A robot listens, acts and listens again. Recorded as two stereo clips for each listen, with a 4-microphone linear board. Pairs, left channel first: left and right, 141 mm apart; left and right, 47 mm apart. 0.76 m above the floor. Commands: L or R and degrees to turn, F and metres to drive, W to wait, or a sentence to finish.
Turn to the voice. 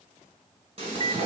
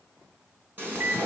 W
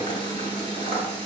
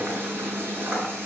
W
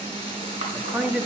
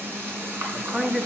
R30
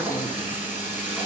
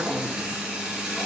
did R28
W
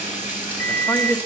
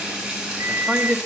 L20
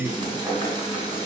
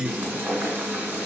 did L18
Found it: a man speaking, straight ahead.